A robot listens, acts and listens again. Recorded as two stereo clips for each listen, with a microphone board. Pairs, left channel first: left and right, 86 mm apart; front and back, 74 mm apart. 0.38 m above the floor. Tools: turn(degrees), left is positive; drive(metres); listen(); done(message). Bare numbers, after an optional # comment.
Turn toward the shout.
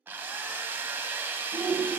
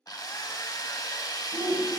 # The shout: 155° right.
turn(-155)
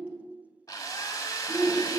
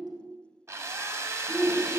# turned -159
done("Found it: a shout, straight ahead, 1 to 2 m away.")